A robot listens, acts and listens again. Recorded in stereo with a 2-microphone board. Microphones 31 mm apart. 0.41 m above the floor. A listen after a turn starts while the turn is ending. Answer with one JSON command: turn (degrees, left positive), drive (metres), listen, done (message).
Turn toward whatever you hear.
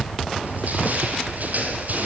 {"turn": -65}
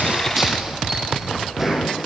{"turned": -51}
{"turn": -15}
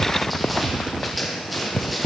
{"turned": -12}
{"done": "Facing the crushing, over 4 m away."}